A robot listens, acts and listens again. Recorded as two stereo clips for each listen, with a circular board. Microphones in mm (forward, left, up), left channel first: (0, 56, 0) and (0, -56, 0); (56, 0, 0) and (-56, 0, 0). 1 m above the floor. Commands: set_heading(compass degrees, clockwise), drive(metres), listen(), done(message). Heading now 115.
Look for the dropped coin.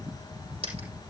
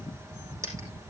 set_heading(235)
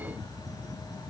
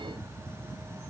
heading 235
done("Facing where the dropped coin came from. I can't hear it now.")